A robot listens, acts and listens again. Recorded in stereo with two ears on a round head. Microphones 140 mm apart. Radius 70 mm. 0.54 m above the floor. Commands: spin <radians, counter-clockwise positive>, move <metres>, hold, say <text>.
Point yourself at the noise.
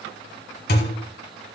spin 1.13
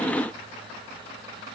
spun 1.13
hold
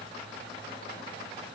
say I heard a thud, but can't make it out now. It was about straight ahead or 50° left.